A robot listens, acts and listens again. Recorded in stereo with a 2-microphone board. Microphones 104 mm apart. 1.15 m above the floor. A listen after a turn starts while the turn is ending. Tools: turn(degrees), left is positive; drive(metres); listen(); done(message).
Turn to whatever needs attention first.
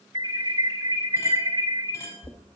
turn(degrees=-45)
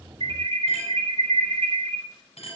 turn(degrees=-85)
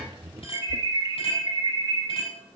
turn(degrees=-45)
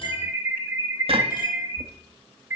turn(degrees=-20)
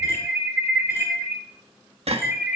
done("Facing the alarm.")